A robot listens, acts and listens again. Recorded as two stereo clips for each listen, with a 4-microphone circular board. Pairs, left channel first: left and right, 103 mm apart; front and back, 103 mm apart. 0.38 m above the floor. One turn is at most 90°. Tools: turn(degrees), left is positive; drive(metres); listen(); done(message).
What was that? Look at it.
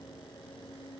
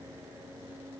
listen()
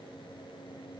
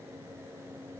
listen()
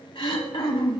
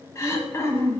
turn(degrees=60)
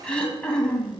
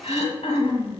turn(degrees=10)
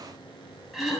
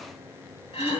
done("Facing the throat clearing, 1 to 2 m away.")